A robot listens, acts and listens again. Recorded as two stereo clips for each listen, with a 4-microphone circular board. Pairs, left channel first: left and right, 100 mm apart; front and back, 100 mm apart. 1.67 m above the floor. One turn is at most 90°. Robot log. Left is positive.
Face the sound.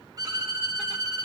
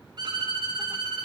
note: The violin: 140° right.
cmd yaw -90
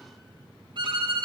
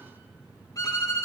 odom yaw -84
note: The violin is now 55° right.
cmd yaw -55
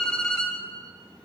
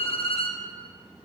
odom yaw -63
note: The violin is now 10° left.
cmd yaw +10
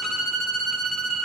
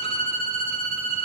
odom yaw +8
end: Facing the violin, 1 to 2 m away.